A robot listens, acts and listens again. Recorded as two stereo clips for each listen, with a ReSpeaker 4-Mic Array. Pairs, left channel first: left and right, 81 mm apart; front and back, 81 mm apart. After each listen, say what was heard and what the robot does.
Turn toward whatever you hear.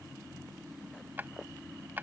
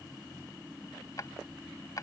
The drawer: 30° right. Turn 30° right.
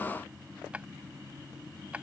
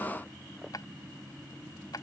The drawer is now 20° right. Turn 20° right.
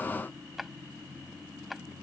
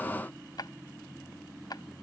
Facing the drawer.